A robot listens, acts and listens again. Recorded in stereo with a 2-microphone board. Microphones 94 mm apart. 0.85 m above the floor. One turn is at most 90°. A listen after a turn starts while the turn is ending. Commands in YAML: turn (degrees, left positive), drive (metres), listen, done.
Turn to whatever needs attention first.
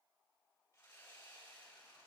listen: true
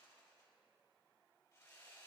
listen: true
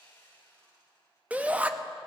turn: -15
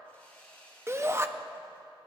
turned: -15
turn: -90
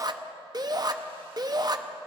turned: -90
turn: -50
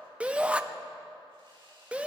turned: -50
turn: -15
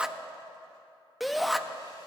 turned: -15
done: "Facing the shout."